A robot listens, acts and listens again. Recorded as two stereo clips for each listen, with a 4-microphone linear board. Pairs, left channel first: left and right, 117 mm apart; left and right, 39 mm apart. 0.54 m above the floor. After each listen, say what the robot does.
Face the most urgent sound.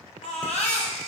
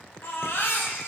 Turn 90° left.
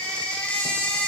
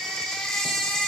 Turn 10° left.
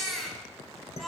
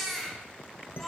Found it: a baby crying, straight ahead, 1 to 2 m away.